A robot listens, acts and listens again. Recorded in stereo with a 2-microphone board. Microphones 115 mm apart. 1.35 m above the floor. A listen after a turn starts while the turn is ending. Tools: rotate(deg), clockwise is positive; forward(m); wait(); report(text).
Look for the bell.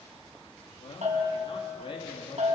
rotate(90)
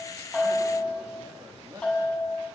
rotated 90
report("Found it: a bell, straight ahead.")